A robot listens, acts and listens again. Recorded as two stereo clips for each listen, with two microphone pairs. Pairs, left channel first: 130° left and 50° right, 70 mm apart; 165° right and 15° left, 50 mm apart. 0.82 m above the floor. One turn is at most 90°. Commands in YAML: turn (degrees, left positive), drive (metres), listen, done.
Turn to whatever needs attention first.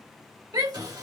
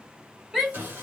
turn: -65
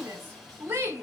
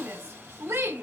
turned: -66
done: "Facing the shout, 1 to 2 m away."